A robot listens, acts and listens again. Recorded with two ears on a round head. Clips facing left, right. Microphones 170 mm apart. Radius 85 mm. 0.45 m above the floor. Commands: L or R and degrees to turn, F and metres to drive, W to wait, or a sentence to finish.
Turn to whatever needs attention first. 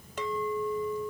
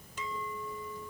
W
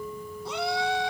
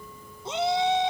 R20
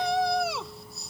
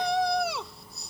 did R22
Facing the shout.